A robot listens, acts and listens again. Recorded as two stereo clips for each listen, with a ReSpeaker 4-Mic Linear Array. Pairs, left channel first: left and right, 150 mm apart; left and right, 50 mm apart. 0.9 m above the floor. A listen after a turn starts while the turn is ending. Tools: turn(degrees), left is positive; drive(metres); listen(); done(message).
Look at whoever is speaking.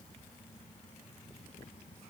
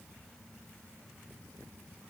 listen()
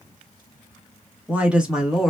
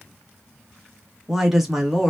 turn(degrees=30)
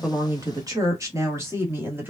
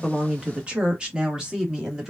turn(degrees=-30)
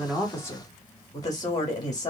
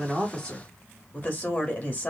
turn(degrees=25)
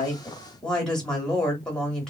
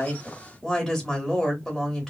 done("Facing the woman speaking.")